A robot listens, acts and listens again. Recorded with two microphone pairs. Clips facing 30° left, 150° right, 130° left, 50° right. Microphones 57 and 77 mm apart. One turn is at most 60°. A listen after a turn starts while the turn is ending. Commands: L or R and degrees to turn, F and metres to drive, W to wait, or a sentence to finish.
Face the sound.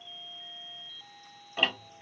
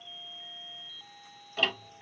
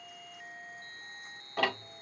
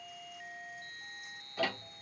L60
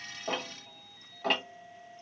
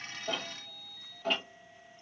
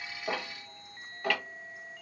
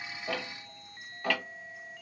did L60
L45
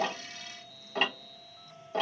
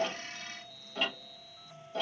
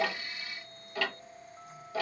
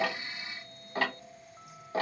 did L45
Found it: ticking, straight ahead, 1 to 2 m away.